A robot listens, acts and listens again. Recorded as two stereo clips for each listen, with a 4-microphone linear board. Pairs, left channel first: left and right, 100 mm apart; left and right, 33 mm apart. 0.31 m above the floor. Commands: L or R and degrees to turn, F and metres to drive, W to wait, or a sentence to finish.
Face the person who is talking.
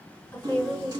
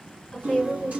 L25
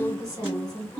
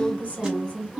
L130
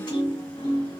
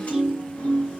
W
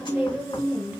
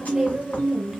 R15
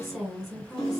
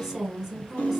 Found it: a woman speaking, straight ahead, 1 to 2 m away.